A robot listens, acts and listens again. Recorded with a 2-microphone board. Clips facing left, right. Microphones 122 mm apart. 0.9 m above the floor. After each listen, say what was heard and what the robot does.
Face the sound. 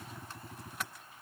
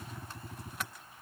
Keep listening.
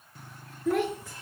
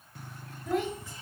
Turn 90° left.
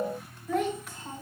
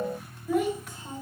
So it is at 15° right. Turn 15° right.
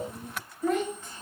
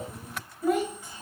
The child speaking is now 10° right. Turn 10° right.
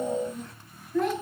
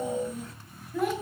The child speaking is now 10° right. Turn 10° right.
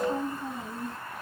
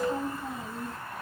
Facing the child speaking.